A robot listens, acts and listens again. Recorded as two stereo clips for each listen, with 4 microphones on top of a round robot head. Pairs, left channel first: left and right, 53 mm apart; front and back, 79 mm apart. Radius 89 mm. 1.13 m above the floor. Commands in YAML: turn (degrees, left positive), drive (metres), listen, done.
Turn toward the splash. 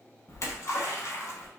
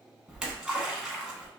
turn: 100
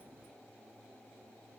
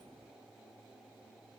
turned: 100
done: "I heard a splash from this way, but can't make it out now."